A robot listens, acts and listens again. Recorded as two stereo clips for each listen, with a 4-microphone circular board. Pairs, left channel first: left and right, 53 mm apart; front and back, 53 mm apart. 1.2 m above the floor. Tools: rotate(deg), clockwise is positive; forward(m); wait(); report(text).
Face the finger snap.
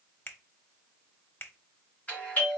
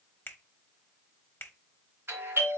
rotate(-45)
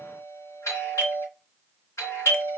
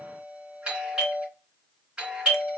wait()
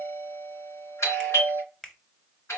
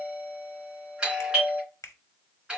report("Facing the finger snap, under 1 m away.")